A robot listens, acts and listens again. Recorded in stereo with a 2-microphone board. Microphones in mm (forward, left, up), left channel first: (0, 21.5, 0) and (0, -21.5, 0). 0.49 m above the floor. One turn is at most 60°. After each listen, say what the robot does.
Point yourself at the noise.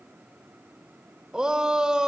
Turn 20° right.
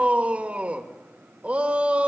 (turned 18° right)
Turn 60° right.
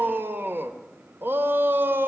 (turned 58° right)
Turn 60° right.
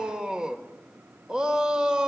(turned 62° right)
Turn 20° right.
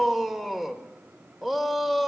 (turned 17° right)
Facing the shout.